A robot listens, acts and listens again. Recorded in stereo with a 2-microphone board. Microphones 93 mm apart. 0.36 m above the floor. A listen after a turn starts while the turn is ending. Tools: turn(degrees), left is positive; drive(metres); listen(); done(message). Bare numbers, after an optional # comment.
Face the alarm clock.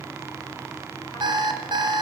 # The alarm clock: about 60° right or 120° right.
turn(-60)
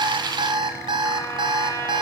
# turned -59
# So it is at 55° right.
turn(-55)
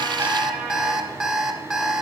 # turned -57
done("Found it: an alarm clock, straight ahead, 1 to 2 m away.")